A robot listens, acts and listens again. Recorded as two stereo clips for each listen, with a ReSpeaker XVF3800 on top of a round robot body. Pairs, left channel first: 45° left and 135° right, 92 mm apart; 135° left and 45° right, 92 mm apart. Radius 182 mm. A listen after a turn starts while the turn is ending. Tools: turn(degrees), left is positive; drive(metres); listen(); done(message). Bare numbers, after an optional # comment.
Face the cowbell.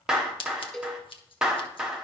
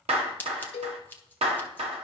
# The cowbell: 135° left.
turn(135)
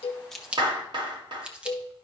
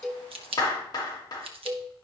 # The cowbell is now 10° left.
turn(10)
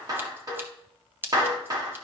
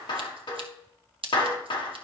listen()
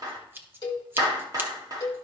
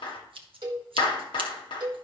done("Found it: a cowbell, straight ahead, 1 to 2 m away.")